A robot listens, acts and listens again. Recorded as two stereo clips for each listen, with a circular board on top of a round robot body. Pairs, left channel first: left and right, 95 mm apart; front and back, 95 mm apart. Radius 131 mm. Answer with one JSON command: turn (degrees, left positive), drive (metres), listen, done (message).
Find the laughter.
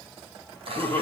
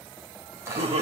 {"turn": 165}
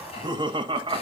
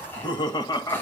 {"turn": -55}
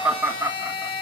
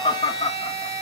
{"turn": -15}
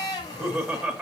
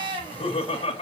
{"done": "Found it: laughter, straight ahead, 1 to 2 m away."}